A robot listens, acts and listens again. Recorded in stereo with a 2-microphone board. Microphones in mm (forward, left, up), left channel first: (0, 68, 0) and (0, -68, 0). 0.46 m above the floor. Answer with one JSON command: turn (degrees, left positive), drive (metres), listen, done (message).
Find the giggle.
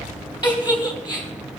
{"turn": 35}
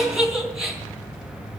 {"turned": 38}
{"done": "Found it: a giggle, straight ahead."}